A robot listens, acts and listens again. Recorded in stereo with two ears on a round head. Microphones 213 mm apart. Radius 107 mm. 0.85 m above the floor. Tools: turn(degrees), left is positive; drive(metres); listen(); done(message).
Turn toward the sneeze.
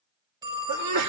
turn(degrees=-90)
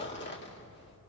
done("I heard a sneeze from this way, but can't make it out now.")